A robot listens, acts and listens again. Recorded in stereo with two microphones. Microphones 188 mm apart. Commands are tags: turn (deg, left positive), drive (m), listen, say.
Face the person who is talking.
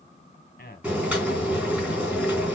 <turn deg="50"/>
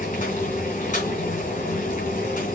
<listen/>
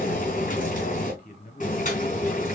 <turn deg="60"/>
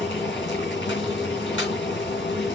<listen/>
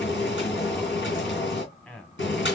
<turn deg="10"/>
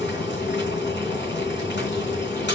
<listen/>
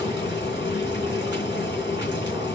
<listen/>
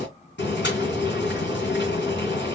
<say>I heard a man speaking from this way, but can't make it out now.</say>